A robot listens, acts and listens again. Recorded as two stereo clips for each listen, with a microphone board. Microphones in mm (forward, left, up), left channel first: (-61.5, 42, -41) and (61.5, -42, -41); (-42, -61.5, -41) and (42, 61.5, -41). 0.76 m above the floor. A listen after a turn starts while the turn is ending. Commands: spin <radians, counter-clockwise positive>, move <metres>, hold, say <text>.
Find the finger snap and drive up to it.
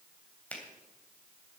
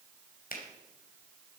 spin -2.36
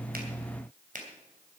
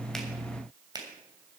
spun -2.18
move 1.0
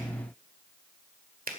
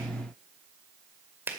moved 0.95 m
spin -0.35
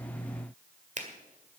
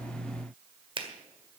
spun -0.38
move 1.0
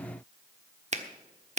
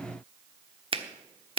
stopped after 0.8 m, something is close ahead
say I am next to the finger snap.